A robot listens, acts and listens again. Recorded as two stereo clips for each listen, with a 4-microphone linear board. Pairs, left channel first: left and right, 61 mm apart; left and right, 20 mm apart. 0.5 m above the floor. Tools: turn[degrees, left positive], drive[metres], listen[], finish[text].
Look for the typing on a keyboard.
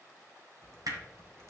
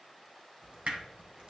Thought: The typing on a keyboard: about 55° right or 125° right.
Action: turn[-55]
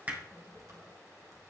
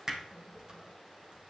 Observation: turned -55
Thought: So it is at 65° right.
Action: turn[-65]
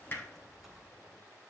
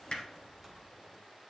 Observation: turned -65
Action: finish[Found it: typing on a keyboard, straight ahead.]